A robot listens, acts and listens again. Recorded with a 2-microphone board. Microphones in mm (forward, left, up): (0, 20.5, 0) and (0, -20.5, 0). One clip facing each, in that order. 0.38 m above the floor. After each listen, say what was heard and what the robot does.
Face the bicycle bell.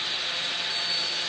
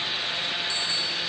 Turn 90° right.
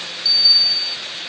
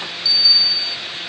Found it: a bicycle bell, straight ahead.